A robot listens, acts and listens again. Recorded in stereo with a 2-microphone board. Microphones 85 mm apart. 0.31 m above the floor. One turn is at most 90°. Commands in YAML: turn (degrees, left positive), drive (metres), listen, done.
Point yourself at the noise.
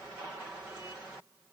listen: true
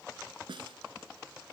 turn: -90
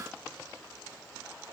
listen: true
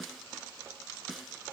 done: "Found it: a snare drum, straight ahead."